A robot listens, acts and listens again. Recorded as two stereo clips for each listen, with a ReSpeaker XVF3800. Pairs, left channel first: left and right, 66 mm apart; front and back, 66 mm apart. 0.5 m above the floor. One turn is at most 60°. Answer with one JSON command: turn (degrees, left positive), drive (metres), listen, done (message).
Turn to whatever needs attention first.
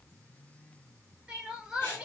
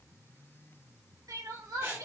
{"turn": -60}
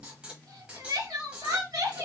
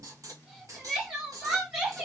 {"turn": -60}
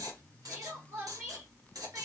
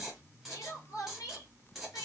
{"turn": -35}
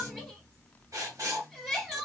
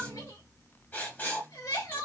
{"done": "Facing the crying."}